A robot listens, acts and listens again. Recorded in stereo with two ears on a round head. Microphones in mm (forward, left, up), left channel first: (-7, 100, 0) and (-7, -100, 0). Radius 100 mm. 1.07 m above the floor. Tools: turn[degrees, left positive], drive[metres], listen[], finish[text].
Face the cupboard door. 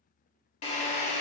Action: listen[]
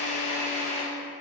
Action: listen[]
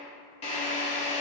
Action: finish[I can't make out a cupboard door to turn to.]